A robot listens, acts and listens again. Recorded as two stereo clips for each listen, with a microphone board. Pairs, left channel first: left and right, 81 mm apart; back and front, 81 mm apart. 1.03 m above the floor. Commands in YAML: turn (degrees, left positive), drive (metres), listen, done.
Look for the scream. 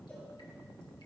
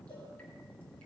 listen: true
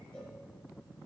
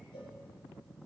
listen: true
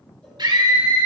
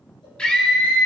turn: -105
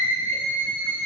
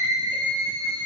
turn: -30
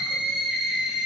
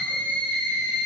turn: -10
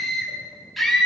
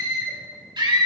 done: "Found it: a scream, straight ahead."